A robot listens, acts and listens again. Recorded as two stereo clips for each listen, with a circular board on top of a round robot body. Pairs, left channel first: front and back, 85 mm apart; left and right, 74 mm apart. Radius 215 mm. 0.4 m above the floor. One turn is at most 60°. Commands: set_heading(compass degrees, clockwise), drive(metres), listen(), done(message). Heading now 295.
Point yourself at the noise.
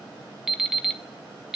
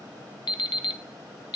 set_heading(235)
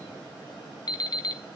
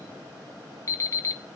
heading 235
set_heading(195)
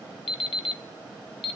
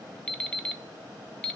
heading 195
set_heading(185)
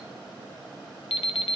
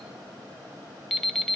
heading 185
done("Found it: an alarm clock, straight ahead.")